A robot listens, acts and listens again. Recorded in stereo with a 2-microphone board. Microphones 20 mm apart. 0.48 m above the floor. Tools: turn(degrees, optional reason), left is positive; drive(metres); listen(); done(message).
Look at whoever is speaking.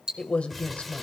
turn(degrees=65, reason="The man speaking: about 65° left or 115° left.")
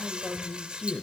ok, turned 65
turn(degrees=25, reason="So it is at 25° left.")
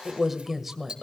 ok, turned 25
turn(degrees=-10, reason="The man speaking is now 10° right.")
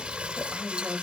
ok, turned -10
done("Found it: a man speaking, straight ahead.")